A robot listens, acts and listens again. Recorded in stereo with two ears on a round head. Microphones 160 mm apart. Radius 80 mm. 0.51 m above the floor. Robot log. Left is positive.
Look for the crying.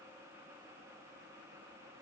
cmd idle
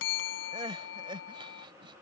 note: The crying: about 30° right or 150° right.
cmd yaw -30
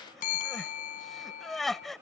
end: Facing the crying.